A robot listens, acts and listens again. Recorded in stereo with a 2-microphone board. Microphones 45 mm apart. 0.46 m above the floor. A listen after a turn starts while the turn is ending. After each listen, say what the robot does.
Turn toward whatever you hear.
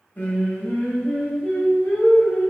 Turn 45° left.
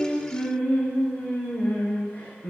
Turn 80° left.
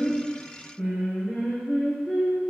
Turn 10° left.
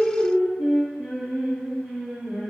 Facing the singing.